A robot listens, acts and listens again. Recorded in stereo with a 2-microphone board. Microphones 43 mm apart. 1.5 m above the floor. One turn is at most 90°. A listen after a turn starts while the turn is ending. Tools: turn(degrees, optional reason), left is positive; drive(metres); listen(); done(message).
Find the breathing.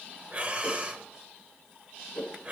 turn(degrees=-35, reason="The breathing: about 35° right or 145° right.")
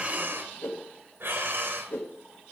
turn(degrees=-90, reason="So it is at 105° right.")
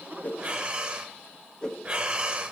turn(degrees=-25, reason="The breathing is now 25° right.")
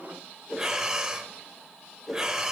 turn(degrees=-10, reason="The breathing is now 10° right.")
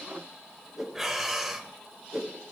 done("Facing the breathing.")